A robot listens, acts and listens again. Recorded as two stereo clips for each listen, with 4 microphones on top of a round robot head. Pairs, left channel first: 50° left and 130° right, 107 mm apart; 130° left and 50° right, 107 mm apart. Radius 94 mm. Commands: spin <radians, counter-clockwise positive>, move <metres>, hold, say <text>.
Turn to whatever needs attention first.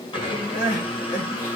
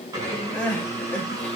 spin 0.87
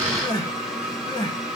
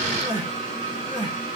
say Facing the crying, 1 to 2 m away.